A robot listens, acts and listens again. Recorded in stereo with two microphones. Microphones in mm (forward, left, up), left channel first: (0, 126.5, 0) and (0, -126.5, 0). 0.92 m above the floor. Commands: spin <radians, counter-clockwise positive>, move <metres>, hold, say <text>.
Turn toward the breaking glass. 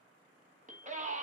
hold
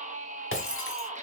spin 0.96
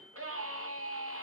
hold
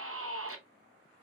say I heard breaking glass, but can't make it out now. It was about straight ahead or 70° left.